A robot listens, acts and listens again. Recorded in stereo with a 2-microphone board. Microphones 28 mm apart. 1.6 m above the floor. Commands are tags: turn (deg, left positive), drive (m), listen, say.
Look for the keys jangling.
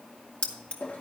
<turn deg="40"/>
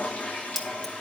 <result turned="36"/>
<turn deg="10"/>
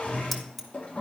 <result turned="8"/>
<say>Facing the keys jangling, 1 to 2 m away.</say>